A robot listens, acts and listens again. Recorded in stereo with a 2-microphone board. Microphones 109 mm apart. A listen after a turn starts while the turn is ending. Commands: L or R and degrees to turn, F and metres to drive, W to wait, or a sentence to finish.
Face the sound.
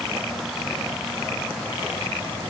W
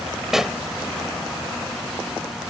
R30
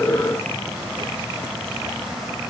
W
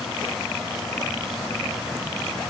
I heard a pop, but can't make it out now. It was about 25° left or 145° right.